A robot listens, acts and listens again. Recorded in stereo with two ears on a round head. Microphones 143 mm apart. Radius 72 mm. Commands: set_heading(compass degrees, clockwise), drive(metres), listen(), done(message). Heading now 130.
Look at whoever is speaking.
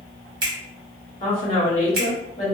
set_heading(90)
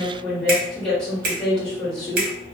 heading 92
done("Found it: a woman speaking, straight ahead.")